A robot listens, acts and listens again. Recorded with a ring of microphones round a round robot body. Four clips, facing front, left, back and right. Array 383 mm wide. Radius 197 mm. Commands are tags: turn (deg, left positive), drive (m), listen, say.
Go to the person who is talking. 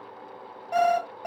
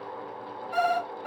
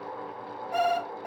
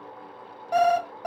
<listen/>
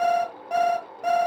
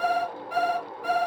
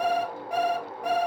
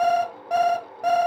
<listen/>
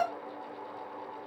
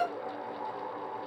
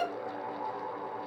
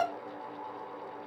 <say>I can't make out anyone speaking, only an alarm clock.</say>